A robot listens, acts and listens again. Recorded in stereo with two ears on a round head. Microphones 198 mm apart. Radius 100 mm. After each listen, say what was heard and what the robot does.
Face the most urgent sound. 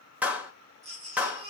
The baby crying: about 30° right or 150° right. Turn 30° right.
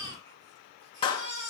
So it is at 120° right. Turn 120° right.
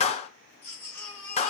The baby crying is now 10° left. Turn 10° left.
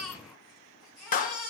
Found it: a baby crying, straight ahead, over 4 m away.